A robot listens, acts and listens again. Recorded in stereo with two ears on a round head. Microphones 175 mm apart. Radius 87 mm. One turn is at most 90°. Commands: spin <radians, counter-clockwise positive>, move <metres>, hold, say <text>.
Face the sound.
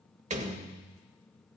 spin -0.70
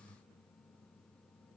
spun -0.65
hold
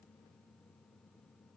say I heard a door slam, but can't make it out now. It was about straight ahead or 105° right.